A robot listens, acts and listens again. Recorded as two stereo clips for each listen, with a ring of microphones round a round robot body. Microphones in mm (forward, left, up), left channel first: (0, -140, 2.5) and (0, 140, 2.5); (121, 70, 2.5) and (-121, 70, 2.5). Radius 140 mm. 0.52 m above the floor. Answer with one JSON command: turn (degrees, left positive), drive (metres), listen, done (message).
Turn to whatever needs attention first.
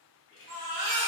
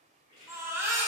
{"turn": 100}
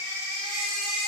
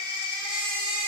{"turn": 50}
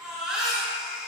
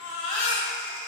{"done": "Facing the baby crying."}